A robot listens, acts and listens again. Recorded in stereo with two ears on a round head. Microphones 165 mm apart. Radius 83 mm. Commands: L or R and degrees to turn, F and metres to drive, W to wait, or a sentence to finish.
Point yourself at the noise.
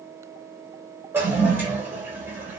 R30
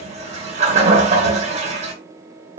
R140
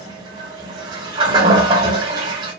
R25
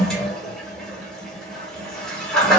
Facing the toilet flushing.